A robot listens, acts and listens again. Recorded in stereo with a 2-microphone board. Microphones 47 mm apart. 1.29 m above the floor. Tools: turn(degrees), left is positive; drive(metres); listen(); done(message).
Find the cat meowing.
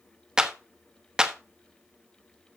listen()
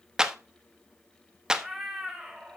turn(degrees=-30)
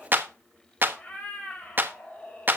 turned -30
turn(degrees=20)
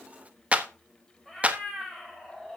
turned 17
done("Facing the cat meowing, 2 to 4 m away.")